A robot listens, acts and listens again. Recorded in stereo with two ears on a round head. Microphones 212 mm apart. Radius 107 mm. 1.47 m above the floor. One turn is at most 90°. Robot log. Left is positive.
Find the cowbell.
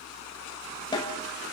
cmd idle
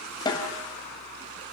cmd idle
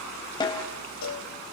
cmd yaw +90
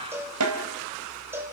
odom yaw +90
note: So it is at 10° right.
cmd yaw -10
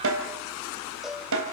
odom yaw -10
end: Facing the cowbell, over 4 m away.